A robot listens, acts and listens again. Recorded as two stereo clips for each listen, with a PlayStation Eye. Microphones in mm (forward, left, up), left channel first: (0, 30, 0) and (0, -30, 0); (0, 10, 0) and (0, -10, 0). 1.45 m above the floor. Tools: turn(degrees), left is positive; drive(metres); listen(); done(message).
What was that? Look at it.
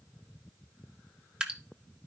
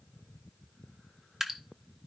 turn(degrees=-15)
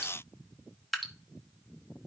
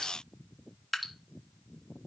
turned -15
done("Facing the dripping.")